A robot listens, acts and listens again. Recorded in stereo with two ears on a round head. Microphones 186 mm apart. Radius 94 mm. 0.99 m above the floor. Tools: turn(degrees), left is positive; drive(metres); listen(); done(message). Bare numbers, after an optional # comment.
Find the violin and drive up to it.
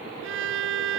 # The violin: about 70° right or 110° right.
turn(-70)
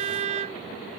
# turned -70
# So it is at 35° right.
turn(-35)
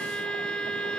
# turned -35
drive(1.0)
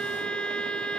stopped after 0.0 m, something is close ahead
done("Something is in my way. I am facing the violin but have not reached it.")